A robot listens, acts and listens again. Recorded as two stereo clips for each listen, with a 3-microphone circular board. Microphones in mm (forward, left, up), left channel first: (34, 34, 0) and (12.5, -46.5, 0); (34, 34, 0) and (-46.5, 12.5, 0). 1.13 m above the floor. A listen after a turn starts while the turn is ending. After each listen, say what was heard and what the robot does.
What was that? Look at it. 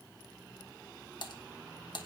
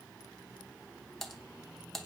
The typing on a keyboard: 100° left. Turn 100° left.
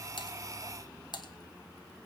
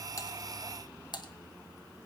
The typing on a keyboard is now 45° left. Turn 45° left.
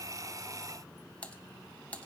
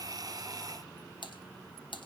Found it: typing on a keyboard, straight ahead, 1 to 2 m away.